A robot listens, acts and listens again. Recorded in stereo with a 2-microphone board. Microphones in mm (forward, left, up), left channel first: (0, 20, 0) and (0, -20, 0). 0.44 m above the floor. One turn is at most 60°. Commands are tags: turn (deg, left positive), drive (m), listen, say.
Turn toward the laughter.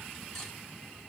<listen/>
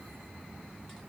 <listen/>
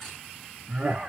<turn deg="-30"/>
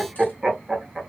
<turn deg="-10"/>
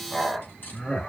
<turn deg="15"/>
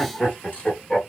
<turn deg="15"/>
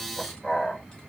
<say>Facing the laughter.</say>